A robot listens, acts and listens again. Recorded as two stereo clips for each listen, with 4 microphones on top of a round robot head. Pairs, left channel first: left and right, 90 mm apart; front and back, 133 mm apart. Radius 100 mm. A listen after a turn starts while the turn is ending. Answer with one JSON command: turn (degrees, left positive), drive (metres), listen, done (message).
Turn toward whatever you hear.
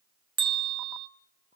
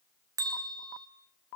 {"turn": -115}
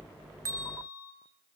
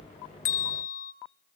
{"turn": -20}
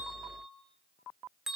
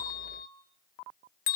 {"done": "Facing the bell, 1 to 2 m away."}